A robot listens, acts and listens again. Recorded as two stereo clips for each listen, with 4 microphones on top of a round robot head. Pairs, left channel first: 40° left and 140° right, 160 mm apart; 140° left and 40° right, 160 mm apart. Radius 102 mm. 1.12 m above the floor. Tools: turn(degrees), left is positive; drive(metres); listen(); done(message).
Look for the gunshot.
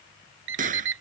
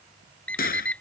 turn(degrees=175)
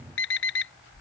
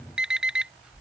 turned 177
done("I heard a gunshot from this way, but can't make it out now.")